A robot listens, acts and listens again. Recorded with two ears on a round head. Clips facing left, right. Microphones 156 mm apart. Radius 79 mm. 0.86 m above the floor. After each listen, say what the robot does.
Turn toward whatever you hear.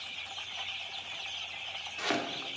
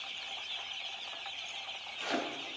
Turn 70° left.
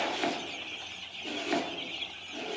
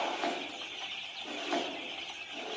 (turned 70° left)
Turn 20° left.
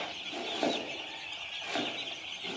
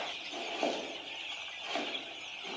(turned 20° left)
Found it: chopping, straight ahead.